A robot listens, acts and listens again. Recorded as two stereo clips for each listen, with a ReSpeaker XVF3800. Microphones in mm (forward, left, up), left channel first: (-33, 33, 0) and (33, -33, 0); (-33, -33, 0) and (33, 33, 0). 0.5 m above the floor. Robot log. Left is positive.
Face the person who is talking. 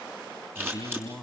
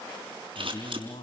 note: The man speaking: 135° right.
cmd yaw -135
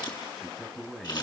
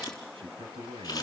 note: The man speaking is now 50° left.
cmd yaw +50
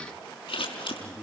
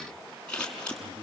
note: The man speaking is now 35° left.
cmd yaw +35
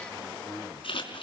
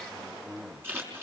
end: Facing the man speaking.